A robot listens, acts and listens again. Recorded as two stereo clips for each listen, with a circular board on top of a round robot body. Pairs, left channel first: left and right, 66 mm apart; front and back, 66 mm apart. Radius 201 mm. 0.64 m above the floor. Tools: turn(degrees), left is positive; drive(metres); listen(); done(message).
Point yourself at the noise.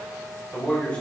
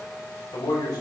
turn(degrees=20)
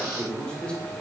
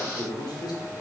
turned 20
turn(degrees=15)
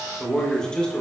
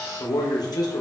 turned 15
turn(degrees=15)
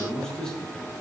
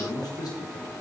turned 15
turn(degrees=15)
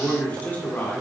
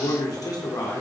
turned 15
turn(degrees=30)
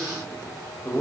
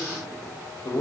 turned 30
turn(degrees=15)
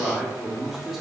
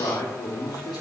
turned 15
done("Facing the man speaking, 2 to 4 m away.")